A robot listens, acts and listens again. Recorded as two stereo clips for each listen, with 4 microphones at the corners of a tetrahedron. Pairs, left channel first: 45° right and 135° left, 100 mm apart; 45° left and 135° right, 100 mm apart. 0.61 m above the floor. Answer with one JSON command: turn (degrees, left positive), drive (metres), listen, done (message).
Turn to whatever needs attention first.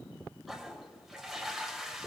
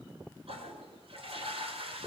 {"listen": true}
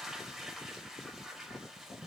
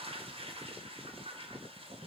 {"listen": true}
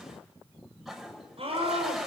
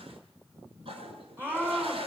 {"turn": 155}
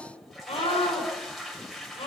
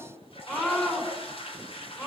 {"turn": -20}
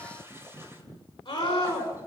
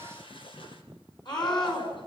{"done": "Found it: a scream, straight ahead, over 4 m away."}